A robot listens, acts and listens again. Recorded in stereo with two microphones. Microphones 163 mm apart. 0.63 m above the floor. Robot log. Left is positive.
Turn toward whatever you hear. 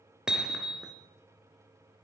cmd yaw -30
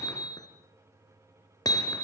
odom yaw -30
note: So it is at 25° left.
cmd yaw +25
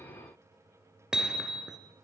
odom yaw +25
end: Found it: hammering, straight ahead.